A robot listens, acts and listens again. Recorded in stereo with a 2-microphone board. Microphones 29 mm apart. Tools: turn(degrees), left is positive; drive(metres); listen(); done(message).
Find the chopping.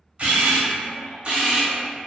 listen()
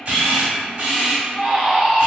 listen()
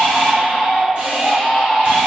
done("I can't make out chopping, only a camera shutter and a baby crying.")